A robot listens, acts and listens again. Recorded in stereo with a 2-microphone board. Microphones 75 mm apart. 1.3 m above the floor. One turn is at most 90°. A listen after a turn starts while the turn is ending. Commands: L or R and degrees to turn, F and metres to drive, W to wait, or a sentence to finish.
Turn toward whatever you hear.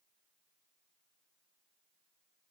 W
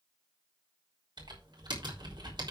R90
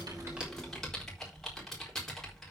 Found it: typing on a keyboard, straight ahead.